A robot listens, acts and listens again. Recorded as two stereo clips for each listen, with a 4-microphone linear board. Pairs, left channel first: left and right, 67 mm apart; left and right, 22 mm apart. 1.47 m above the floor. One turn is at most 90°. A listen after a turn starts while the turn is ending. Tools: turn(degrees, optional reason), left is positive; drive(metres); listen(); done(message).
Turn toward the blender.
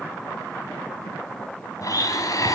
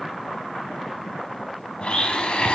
turn(degrees=60, reason="The blender: about 60° left or 120° left.")
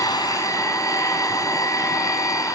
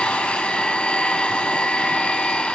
turn(degrees=60, reason="So it is at 60° left.")
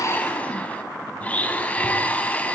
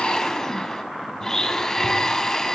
turn(degrees=20, reason="The blender is now 20° left.")
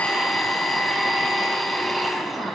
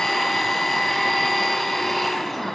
done("Facing the blender, over 4 m away.")